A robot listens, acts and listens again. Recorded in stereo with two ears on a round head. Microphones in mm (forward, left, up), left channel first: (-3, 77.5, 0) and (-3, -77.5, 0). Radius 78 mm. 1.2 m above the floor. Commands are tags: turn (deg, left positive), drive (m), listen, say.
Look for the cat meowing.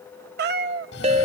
<turn deg="-65"/>
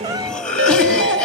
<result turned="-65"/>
<listen/>
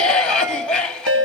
<listen/>
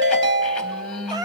<turn deg="-25"/>
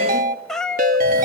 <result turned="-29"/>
<say>Found it: a cat meowing, straight ahead, under 1 m away.</say>